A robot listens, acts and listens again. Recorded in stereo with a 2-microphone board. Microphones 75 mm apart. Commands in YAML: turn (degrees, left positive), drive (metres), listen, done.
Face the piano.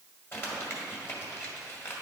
listen: true
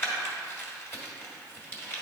listen: true
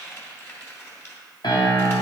turn: 90
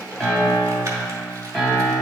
done: "Found it: a piano, straight ahead, 1 to 2 m away."